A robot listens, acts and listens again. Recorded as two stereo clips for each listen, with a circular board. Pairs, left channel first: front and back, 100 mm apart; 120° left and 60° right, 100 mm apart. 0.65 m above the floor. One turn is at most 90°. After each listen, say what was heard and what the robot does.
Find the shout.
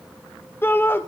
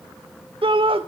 The shout: 65° right. Turn 65° right.
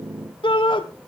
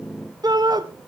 The shout is now 20° right. Turn 20° right.
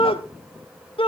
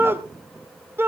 Facing the shout, 2 to 4 m away.